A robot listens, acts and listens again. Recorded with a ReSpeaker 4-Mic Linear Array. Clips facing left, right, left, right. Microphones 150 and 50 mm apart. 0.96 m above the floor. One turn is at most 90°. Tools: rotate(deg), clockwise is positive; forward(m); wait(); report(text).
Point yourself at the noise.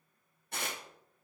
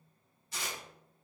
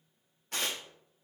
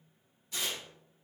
rotate(-60)
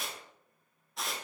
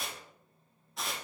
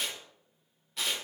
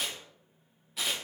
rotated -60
report("Found it: tearing paper, straight ahead.")